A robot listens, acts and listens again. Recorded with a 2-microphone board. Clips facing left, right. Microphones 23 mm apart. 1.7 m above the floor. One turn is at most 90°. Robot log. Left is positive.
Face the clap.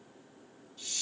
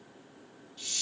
cmd idle
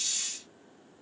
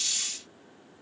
cmd idle
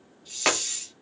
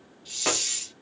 note: The clap: about 55° left or 125° left.
cmd yaw +55
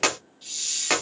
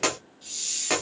note: So it is at 30° left.
cmd yaw +30
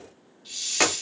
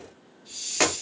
end: Facing the clap.